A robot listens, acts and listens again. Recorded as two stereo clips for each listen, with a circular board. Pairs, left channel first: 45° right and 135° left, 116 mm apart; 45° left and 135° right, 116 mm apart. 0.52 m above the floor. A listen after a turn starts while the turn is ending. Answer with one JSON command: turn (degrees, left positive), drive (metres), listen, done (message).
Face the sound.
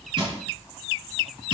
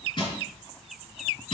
{"turn": 85}
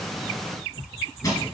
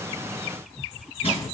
{"turn": 10}
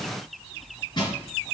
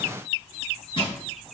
{"done": "Found it: crushing, straight ahead, 2 to 4 m away."}